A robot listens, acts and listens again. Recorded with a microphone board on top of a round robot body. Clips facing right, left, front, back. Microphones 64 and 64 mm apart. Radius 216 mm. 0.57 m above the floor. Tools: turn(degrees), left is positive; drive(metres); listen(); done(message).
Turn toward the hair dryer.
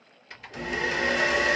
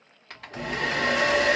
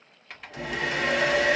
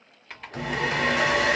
turn(degrees=90)
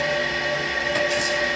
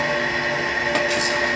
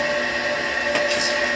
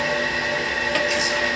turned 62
turn(degrees=30)
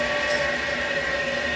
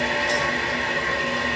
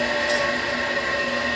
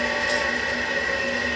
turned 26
done("Facing the hair dryer, 2 to 4 m away.")